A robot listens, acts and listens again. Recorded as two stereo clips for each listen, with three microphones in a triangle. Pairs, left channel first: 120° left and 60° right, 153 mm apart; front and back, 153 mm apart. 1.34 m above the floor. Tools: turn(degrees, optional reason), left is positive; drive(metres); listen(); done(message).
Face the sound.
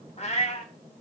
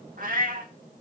turn(degrees=160, reason="The cat meowing: 160° left.")
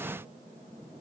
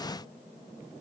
listen()
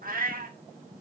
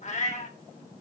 turn(degrees=-40, reason="The cat meowing is now 40° right.")
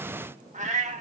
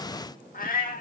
turn(degrees=-20, reason="The cat meowing is now 20° right.")
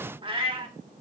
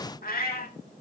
done("Facing the cat meowing, 1 to 2 m away.")